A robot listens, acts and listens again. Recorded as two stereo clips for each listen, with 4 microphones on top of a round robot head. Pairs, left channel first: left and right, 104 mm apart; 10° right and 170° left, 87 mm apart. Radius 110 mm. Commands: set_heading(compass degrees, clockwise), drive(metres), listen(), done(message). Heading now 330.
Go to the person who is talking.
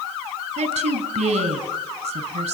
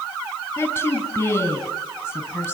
set_heading(45)
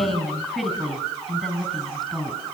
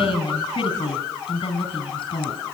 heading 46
drive(1.0)
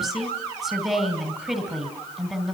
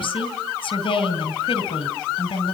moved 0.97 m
drive(1.0)
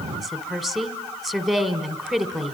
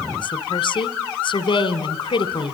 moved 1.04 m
drive(1.0)
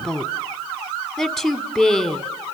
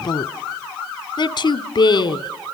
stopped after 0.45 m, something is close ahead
done("Arrived at the woman speaking, straight ahead.")